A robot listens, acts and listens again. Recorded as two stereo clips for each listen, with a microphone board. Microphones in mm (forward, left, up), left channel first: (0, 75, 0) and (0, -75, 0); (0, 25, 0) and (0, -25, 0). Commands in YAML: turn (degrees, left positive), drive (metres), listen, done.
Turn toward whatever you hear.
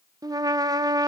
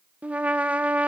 turn: -25
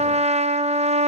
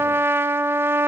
turn: -130
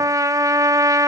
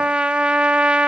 turn: -25
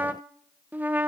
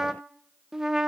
turn: -10
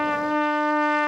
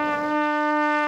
done: "Facing the trumpet."